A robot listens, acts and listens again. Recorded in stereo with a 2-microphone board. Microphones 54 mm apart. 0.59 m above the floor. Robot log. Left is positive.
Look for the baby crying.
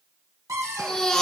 cmd yaw +30
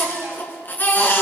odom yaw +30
note: So it is at 145° left.
cmd yaw +145
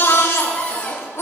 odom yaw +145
note: The baby crying is now 55° left.
cmd yaw +55
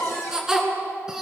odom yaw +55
note: The baby crying is now 10° right.
cmd yaw -10
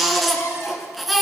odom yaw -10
end: Facing the baby crying, 2 to 4 m away.